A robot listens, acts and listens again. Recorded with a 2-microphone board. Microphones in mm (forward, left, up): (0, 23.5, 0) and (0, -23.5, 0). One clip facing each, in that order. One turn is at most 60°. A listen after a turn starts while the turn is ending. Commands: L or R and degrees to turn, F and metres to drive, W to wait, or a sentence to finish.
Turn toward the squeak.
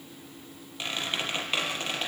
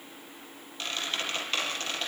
L15
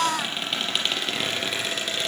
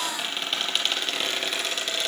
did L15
Found it: a squeak, straight ahead.